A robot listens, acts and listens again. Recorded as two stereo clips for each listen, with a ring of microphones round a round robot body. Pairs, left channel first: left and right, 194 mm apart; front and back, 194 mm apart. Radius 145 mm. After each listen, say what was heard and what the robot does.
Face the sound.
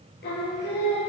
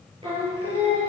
The singing: 120° left. Turn 120° left.
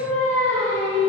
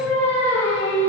The singing is now 10° left. Turn 10° left.
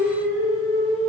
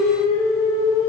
Found it: singing, straight ahead.